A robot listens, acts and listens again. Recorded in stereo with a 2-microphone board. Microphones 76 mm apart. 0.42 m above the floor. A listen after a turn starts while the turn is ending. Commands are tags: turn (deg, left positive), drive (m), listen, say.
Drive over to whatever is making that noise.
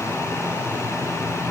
<listen/>
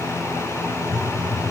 <turn deg="30"/>
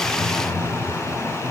<turn deg="140"/>
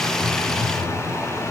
<turn deg="30"/>
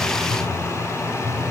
<drive m="1.0"/>
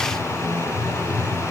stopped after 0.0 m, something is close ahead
<say>Something is in my way. I am facing the phone buzzing but have not reached it.</say>